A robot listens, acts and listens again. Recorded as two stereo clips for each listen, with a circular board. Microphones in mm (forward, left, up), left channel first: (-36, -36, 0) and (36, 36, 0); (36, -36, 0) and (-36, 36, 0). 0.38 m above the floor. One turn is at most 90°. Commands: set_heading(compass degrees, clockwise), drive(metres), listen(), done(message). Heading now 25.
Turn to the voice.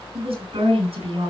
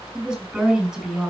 set_heading(330)
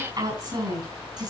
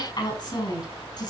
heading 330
done("Found it: a woman speaking, straight ahead.")